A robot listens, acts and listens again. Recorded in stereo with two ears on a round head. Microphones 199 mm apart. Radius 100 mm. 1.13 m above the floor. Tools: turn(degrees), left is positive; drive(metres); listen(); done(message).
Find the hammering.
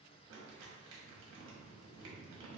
listen()
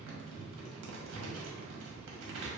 listen()
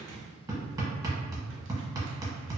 turn(degrees=-15)
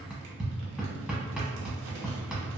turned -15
done("Found it: hammering, straight ahead, under 1 m away.")